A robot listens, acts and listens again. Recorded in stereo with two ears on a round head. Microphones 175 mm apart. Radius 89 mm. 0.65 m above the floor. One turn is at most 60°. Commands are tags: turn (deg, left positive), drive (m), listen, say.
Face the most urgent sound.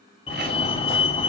<turn deg="30"/>
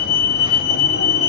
<turn deg="60"/>
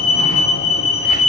<turn deg="40"/>
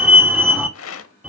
<turn deg="-10"/>
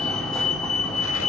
<say>Facing the fire alarm, 2 to 4 m away.</say>